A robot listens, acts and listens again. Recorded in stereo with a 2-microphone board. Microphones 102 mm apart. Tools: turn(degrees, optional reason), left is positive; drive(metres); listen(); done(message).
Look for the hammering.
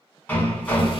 turn(degrees=15, reason="The hammering: about 15° left or 165° left.")
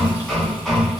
done("Facing the hammering.")